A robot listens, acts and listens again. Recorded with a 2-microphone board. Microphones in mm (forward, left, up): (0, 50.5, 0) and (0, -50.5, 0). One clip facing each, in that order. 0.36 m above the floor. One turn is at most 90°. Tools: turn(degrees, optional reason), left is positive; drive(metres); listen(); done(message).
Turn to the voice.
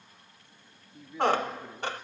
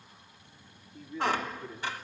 turn(degrees=25, reason="The man speaking: about 25° left or 155° left.")
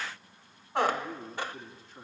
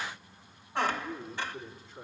turn(degrees=90, reason="So it is at 130° left.")
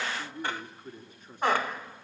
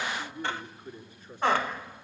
turn(degrees=70, reason="The man speaking is now 70° left.")
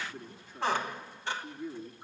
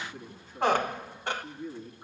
done("Found it: a man speaking, straight ahead.")